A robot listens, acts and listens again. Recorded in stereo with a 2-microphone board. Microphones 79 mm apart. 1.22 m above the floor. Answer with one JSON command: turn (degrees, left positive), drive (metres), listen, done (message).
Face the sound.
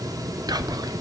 {"turn": -60}
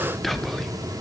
{"done": "Found it: whispering, straight ahead, under 1 m away."}